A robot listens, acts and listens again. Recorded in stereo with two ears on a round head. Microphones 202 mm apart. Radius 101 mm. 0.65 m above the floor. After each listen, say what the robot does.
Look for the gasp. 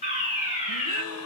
Turn 75° left.
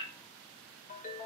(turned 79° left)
Keep listening.
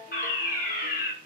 I heard a gasp, but can't make it out now. It was about 5° right or 25° left.